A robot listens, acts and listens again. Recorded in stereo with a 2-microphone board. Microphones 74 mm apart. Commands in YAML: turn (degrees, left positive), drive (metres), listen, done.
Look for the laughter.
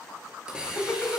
turn: 25
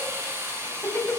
turn: 25
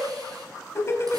turn: 35
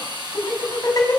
turn: 130
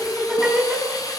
turn: -10
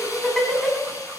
done: "Found it: laughter, straight ahead."